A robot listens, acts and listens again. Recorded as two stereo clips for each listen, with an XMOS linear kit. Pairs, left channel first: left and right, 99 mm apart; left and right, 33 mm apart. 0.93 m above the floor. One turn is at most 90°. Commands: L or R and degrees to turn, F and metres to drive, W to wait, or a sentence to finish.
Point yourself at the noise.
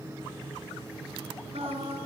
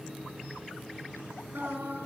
R90
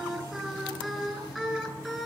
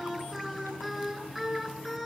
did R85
Facing the singing, over 4 m away.